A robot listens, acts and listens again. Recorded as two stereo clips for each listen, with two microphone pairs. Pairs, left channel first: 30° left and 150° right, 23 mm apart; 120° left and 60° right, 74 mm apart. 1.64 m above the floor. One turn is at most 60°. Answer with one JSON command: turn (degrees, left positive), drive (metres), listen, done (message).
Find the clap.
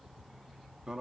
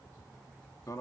{"listen": true}
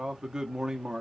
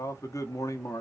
{"listen": true}
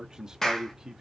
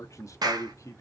{"turn": -40}
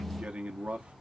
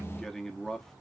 {"listen": true}
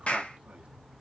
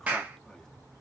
{"done": "Found it: a clap, straight ahead, 1 to 2 m away."}